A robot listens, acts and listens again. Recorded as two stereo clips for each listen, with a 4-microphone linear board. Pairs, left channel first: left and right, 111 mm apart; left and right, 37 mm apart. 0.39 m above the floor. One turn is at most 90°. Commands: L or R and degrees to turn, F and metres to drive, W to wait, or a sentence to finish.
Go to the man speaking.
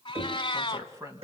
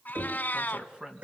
R25
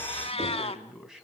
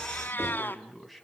F1.0
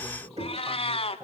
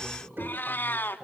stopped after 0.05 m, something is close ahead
R10
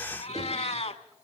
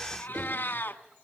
W
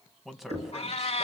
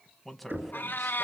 Blocked. The man speaking is further on, straight ahead.